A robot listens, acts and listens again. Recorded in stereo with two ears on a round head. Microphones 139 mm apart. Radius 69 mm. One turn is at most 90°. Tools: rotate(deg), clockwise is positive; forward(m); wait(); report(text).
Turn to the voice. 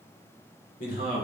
rotate(-60)
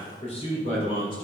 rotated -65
rotate(-40)
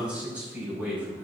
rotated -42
rotate(10)
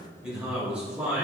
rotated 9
rotate(10)
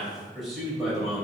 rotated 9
report("Found it: a man speaking, straight ahead.")